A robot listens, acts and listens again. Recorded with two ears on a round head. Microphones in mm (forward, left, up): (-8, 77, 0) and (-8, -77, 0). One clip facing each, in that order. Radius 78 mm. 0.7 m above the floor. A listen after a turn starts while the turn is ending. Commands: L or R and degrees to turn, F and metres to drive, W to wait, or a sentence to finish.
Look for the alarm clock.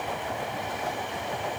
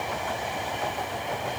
W
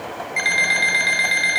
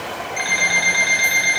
L25
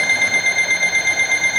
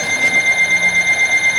Facing the alarm clock, 1 to 2 m away.